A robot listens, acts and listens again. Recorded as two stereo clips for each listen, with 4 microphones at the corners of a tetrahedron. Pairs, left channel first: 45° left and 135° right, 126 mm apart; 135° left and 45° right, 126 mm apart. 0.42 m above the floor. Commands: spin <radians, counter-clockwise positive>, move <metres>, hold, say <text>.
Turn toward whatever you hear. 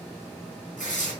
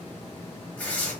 spin 0.96
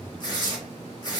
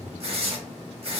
spin -0.17
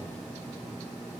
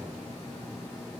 hold
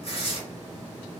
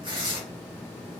say Found it: tearing paper, straight ahead, under 1 m away.